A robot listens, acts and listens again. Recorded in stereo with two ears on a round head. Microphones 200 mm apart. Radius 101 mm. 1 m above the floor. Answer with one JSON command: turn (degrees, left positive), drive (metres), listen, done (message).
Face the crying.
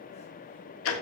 {"listen": true}
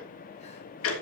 {"listen": true}
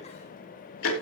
{"done": "I can't make out crying to turn to."}